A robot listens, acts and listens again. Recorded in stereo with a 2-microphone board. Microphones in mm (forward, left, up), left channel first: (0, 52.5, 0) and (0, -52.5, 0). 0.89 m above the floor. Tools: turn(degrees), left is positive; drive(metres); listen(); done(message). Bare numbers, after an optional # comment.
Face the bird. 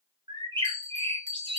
# The bird: about 45° right or 135° right.
turn(-45)
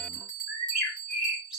done("Found it: a bird, straight ahead, 2 to 4 m away.")